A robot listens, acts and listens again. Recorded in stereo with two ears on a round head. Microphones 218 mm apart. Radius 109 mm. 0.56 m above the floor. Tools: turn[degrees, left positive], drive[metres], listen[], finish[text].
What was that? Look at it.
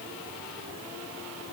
Action: listen[]
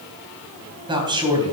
Thought: The man speaking: about 20° right or 160° right.
Action: turn[-20]
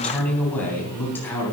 Thought: So it is at 10° left.
Action: turn[10]
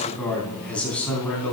Action: finish[Facing the man speaking.]